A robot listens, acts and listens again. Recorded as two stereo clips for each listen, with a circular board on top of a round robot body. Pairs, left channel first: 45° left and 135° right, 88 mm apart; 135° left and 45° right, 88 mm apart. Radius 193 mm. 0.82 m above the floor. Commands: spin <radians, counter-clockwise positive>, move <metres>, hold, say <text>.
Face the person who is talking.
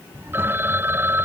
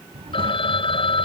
spin -1.22
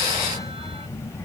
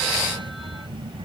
spin -0.26
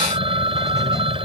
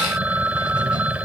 hold
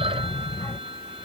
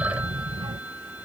spin -0.35
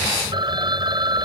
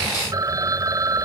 hold
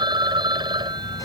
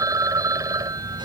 hold
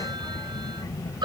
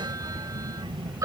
spin -0.17
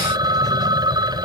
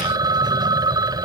hold
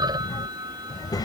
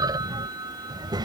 say Found it: a child speaking, straight ahead.